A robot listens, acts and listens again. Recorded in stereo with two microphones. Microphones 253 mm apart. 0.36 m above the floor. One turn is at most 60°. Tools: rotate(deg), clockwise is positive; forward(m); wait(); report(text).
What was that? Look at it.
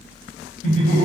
rotate(-35)
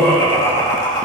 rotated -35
rotate(-15)
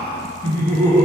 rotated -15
rotate(-10)
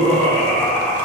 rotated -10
rotate(-10)
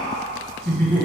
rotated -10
report("Facing the laughter, 2 to 4 m away.")